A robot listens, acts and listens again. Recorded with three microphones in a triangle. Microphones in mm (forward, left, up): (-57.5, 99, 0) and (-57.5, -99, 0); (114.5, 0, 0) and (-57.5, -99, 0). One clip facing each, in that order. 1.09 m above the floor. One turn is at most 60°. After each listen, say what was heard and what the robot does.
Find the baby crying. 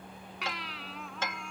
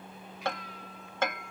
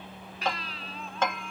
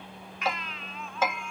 The baby crying: 85° left. Turn 60° left.
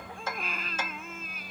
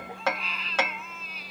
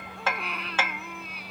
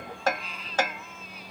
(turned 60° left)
The baby crying is now 50° left. Turn 50° left.
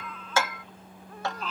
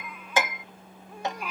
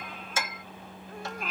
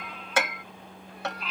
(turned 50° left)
The baby crying is now 10° right. Turn 10° right.
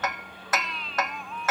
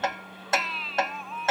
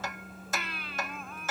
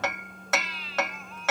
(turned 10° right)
Found it: a baby crying, straight ahead.